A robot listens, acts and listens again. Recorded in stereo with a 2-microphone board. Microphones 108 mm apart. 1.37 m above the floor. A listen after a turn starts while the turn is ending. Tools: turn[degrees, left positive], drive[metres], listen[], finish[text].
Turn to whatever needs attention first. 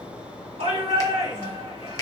Action: turn[-90]
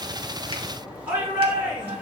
Thought: So it is at 15° right.
Action: turn[-15]
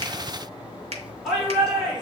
Action: finish[Facing the shout.]